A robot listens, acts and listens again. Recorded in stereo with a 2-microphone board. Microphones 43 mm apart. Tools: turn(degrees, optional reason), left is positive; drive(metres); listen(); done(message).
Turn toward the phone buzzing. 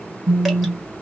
turn(degrees=-45, reason="The phone buzzing: about 45° right or 135° right.")
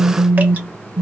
turn(degrees=-95, reason="So it is at 95° right.")
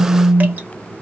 done("Facing the phone buzzing, under 1 m away.")